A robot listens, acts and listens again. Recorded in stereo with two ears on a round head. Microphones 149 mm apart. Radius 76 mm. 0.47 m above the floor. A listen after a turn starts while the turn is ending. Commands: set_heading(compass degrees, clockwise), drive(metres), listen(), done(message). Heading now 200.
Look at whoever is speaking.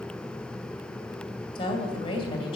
set_heading(170)
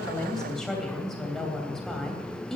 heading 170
done("Found it: a woman speaking, straight ahead, 2 to 4 m away.")